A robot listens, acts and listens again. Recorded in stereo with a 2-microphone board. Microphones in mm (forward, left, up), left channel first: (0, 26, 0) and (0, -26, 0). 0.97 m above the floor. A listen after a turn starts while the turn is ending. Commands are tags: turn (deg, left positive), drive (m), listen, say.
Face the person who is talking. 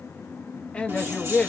<turn deg="25"/>
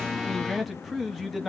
<say>Found it: a man speaking, straight ahead.</say>